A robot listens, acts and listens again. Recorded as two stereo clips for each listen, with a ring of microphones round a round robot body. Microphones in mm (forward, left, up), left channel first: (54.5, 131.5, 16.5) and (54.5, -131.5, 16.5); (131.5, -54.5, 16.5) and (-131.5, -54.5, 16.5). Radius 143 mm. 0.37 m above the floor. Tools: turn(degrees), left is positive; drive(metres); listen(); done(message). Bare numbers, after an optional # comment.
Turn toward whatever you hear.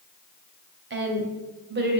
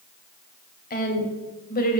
# The woman speaking: 50° right.
turn(-50)
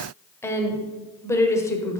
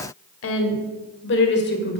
# The woman speaking is now 15° left.
turn(15)
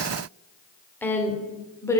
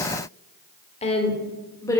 # The woman speaking is now 50° left.
turn(50)
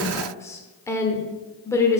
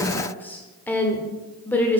# The woman speaking is now 60° left.
turn(60)
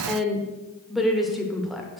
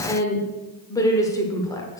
done("Found it: a woman speaking, straight ahead, 1 to 2 m away.")